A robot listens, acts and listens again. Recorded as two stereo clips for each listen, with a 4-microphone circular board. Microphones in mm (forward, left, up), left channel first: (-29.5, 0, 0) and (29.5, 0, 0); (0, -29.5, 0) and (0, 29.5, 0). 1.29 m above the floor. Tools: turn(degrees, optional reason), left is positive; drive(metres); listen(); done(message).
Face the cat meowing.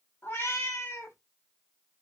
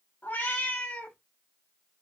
turn(degrees=-150, reason="The cat meowing: 150° right.")
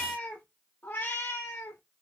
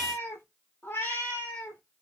turn(degrees=-150, reason="The cat meowing is now 150° right.")
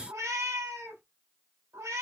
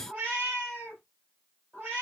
turn(degrees=25, reason="The cat meowing is now 25° left.")
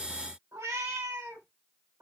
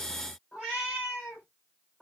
done("Facing the cat meowing.")